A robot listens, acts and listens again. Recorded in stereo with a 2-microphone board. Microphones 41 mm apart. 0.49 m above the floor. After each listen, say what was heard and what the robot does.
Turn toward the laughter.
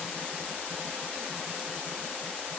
Keep listening.
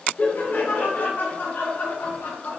The laughter: about 65° left or 115° left. Turn 65° left.
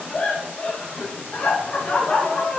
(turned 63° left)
So it is at 30° left. Turn 30° left.
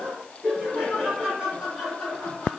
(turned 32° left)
Found it: laughter, straight ahead, 2 to 4 m away.